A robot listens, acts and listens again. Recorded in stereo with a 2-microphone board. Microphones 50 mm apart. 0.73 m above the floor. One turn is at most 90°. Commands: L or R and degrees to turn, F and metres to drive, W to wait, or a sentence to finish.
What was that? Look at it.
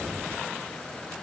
W
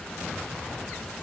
W
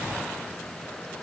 I can't make out anything.